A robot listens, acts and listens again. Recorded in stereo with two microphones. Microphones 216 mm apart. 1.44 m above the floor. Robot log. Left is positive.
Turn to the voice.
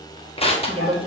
note: The woman speaking: about 25° right or 155° right.
cmd yaw -25
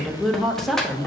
end: Found it: a woman speaking, straight ahead, 1 to 2 m away.